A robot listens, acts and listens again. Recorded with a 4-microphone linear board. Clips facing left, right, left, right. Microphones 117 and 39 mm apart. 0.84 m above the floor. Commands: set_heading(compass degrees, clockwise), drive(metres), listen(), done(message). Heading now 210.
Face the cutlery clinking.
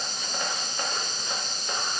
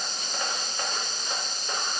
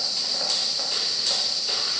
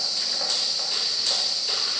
listen()
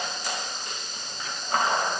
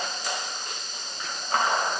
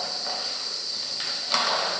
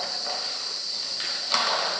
listen()
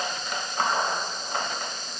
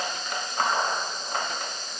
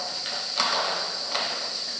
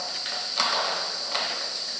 done("I can't make out cutlery clinking.")